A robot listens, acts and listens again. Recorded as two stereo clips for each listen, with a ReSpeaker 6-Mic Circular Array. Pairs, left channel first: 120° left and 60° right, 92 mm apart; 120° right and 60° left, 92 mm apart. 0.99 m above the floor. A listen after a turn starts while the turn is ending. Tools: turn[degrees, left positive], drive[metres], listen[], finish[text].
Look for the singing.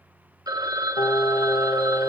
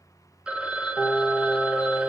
Thought: The singing: 145° left.
Action: turn[145]
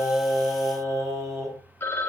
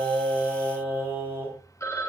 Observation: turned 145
Action: finish[Facing the singing.]